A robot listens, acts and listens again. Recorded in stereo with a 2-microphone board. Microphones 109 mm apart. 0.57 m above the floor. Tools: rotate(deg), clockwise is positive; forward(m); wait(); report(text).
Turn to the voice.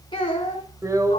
rotate(-45)
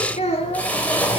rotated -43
rotate(-95)
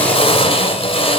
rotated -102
rotate(10)
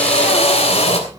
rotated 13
wait()
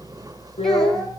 report("Found it: a child speaking, straight ahead, 2 to 4 m away.")